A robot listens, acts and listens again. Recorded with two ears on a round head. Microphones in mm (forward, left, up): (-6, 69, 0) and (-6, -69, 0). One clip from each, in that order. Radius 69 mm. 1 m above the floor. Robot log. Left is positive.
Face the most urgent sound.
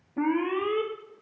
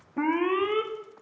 note: The alarm: about 20° right or 160° right.
cmd yaw -20
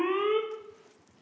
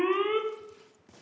end: Found it: an alarm, straight ahead.